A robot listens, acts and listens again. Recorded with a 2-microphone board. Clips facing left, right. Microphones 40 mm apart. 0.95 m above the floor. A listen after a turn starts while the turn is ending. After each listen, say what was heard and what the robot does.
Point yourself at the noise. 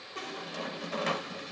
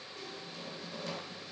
The squeak: about 70° left or 110° left. Turn 70° left.
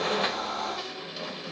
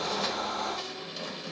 So it is at 10° left. Turn 10° left.
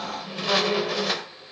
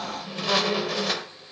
Facing the squeak, 1 to 2 m away.